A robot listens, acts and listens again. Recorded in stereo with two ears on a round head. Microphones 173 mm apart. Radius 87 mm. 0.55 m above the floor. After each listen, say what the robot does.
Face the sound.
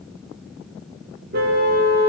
Turn 55° right.
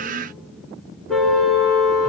Found it: a car horn, straight ahead.